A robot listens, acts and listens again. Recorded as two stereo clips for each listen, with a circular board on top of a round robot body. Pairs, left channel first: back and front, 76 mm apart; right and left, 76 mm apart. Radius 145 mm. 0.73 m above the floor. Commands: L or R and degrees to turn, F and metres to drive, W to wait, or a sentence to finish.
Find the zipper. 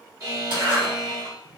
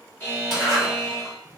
Facing the zipper.